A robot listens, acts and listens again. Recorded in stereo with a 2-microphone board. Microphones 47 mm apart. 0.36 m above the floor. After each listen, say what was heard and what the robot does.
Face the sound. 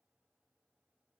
Keep listening.
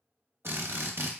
The drill: about 60° right or 120° right. Turn 60° right.
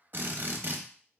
So it is at 55° right. Turn 55° right.
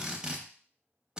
The drill is now 20° right. Turn 20° right.
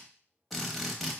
Facing the drill.